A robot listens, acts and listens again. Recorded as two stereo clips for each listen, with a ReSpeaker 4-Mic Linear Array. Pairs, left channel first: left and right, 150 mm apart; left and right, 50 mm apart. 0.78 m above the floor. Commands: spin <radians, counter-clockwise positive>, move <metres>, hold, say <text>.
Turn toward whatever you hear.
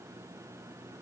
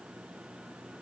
hold
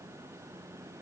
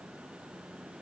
hold
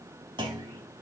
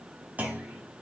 spin -0.52
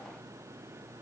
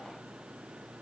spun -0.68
hold
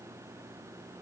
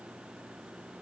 say I heard a clunk, but can't make it out now. It was about 5° left or 110° right.